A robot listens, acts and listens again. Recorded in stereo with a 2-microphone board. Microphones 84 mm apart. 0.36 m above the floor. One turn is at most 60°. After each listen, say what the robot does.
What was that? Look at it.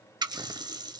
Turn 55° right.
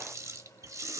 Turn 45° right.
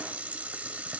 Turn 20° right.
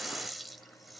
Found it: a running tap, straight ahead.